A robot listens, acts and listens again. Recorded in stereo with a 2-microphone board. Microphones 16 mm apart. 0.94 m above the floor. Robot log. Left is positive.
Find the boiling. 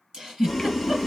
cmd yaw +30
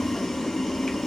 note: So it is at 140° left.
cmd yaw +140
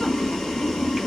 note: The boiling is now 40° left.
cmd yaw +40
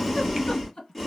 end: Facing the boiling.